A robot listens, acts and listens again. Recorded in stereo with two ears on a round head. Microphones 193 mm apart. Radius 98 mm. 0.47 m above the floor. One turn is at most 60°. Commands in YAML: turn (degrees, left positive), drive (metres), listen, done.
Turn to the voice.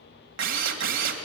listen: true
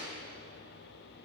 listen: true
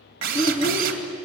turn: 30
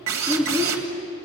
done: "Found it: a child speaking, straight ahead."